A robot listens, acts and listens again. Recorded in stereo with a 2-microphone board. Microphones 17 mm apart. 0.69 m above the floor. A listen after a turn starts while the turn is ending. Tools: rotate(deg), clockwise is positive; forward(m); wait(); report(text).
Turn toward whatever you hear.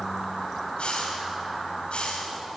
rotate(-90)
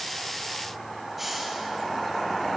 rotate(10)
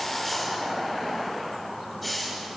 report("Facing the hiss, over 4 m away.")